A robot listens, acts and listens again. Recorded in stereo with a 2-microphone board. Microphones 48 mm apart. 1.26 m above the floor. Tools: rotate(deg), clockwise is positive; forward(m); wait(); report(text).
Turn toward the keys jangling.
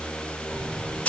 rotate(-60)
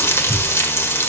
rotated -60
report("Facing the keys jangling, 2 to 4 m away.")